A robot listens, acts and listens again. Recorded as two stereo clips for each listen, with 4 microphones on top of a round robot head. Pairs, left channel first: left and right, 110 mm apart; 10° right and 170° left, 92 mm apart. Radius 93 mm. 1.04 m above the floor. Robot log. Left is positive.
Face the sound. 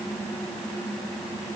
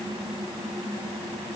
cmd idle
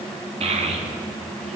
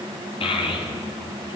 note: The child speaking: 50° right.
cmd yaw -50
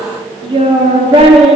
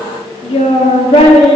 note: The child speaking is now 45° right.
cmd yaw -45
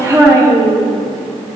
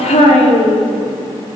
note: The child speaking is now 25° right.
cmd yaw -25
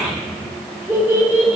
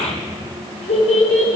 note: The child speaking is now 15° right.
cmd yaw -15
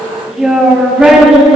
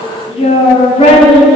end: Facing the child speaking.